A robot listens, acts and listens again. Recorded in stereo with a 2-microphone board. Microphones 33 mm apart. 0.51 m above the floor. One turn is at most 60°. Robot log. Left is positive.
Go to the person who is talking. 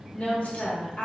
note: The woman speaking: about 55° left or 125° left.
cmd yaw +55
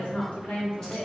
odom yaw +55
note: So it is at 60° left.
cmd yaw +60
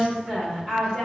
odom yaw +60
cmd fwd 1.0
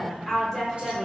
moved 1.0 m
note: The woman speaking is now 10° left.
cmd yaw +10
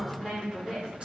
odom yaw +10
cmd fwd 1.0
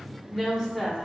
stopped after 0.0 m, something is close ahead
end: Arrived at the woman speaking, straight ahead.